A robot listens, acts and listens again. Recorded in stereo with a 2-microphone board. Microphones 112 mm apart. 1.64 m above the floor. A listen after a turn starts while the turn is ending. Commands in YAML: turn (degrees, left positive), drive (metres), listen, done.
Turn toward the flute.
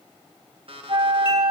turn: -45
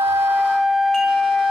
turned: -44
done: "Facing the flute."